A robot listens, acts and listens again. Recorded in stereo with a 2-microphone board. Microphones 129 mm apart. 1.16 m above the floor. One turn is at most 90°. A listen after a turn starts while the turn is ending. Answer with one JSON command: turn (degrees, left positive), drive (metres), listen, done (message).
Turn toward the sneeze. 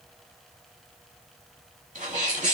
{"turn": -90}
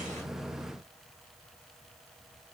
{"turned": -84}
{"done": "I heard a sneeze from this way, but can't make it out now."}